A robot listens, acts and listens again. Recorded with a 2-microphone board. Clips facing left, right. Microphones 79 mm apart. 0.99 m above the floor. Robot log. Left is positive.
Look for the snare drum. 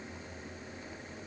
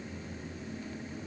cmd idle
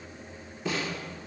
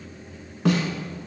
note: The snare drum: about 65° right or 115° right.
cmd yaw -65
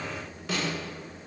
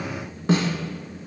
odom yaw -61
note: So it is at 40° right.
cmd yaw -40
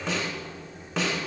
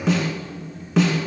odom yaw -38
end: Facing the snare drum, 1 to 2 m away.